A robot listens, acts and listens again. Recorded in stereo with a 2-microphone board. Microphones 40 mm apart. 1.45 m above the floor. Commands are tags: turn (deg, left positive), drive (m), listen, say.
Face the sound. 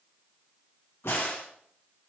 <turn deg="90"/>
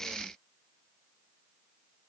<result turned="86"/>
<say>Facing where the crack came from. I can't hear it now.</say>